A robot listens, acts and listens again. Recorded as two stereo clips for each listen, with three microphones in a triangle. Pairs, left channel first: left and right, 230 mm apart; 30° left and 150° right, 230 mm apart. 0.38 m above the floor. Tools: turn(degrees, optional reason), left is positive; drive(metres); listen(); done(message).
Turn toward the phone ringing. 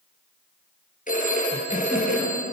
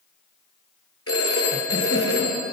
turn(degrees=35, reason="The phone ringing: 35° left.")
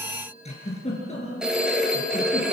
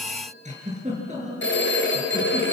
done("Found it: a phone ringing, straight ahead, over 4 m away.")